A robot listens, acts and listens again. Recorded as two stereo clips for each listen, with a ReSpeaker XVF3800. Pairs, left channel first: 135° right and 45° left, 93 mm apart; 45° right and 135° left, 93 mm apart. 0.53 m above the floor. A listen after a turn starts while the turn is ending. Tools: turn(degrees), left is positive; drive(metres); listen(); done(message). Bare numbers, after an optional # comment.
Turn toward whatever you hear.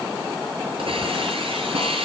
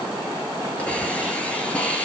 # The hiss: 30° left.
turn(30)
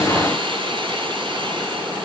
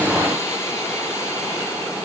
listen()
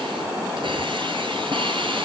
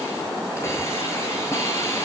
# The hiss is now 15° left.
turn(15)
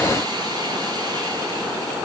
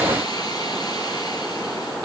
listen()
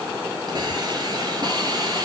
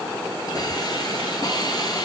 done("Found it: a hiss, straight ahead.")